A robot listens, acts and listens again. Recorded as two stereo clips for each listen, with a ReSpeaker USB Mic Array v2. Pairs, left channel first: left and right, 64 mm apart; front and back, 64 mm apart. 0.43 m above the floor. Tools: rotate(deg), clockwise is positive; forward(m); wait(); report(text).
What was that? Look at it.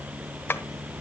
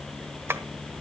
rotate(-135)
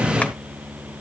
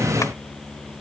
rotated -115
rotate(-20)
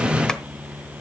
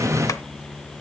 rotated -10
rotate(-10)
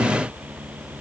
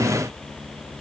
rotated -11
report("Facing where the tapping came from. I can't hear it now.")